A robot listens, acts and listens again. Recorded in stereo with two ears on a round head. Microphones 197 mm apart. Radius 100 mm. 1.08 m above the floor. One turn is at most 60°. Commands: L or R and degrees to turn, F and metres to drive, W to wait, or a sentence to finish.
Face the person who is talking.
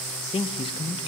L25
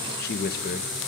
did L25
L60
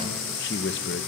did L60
L60
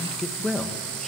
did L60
Found it: a man speaking, straight ahead, 1 to 2 m away.